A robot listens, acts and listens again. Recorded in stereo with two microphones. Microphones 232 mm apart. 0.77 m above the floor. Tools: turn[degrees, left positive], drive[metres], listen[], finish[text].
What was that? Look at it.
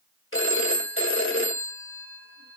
Thought: The phone ringing: about 65° left or 115° left.
Action: turn[65]
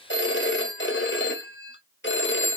Thought: So it is at 55° left.
Action: turn[55]
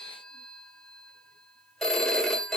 Action: finish[Found it: a phone ringing, straight ahead, 1 to 2 m away.]